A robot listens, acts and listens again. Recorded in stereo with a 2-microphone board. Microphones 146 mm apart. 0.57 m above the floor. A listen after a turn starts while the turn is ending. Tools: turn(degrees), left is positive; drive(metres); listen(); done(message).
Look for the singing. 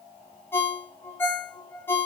listen()
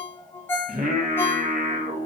turn(degrees=-70)
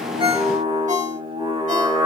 turn(degrees=-40)
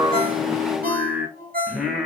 done("Facing the singing.")